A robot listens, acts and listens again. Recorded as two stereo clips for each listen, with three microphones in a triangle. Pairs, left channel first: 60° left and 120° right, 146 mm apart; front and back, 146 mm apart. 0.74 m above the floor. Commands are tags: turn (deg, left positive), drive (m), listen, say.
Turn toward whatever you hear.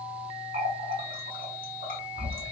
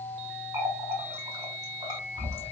<turn deg="-115"/>
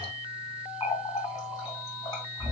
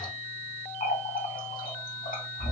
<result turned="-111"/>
<say>Facing the running tap.</say>